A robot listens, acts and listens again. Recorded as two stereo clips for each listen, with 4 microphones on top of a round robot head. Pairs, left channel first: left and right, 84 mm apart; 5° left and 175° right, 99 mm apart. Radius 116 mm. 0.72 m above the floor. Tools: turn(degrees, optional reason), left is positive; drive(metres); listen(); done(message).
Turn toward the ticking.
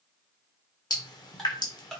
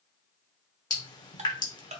turn(degrees=175, reason="The ticking: 175° left.")
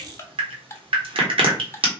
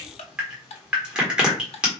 turn(degrees=30, reason="The ticking is now 30° left.")
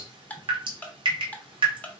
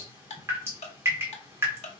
turn(degrees=15, reason="The ticking is now 15° left.")
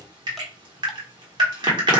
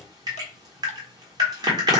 listen()
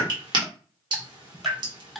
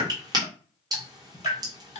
done("Facing the ticking.")